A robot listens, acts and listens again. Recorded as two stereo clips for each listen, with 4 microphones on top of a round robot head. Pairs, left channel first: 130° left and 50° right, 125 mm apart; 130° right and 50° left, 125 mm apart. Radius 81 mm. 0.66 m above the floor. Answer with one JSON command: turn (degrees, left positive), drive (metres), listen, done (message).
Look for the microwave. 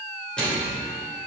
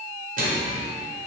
{"turn": 45}
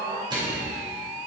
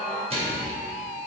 {"done": "Found it: a microwave, straight ahead."}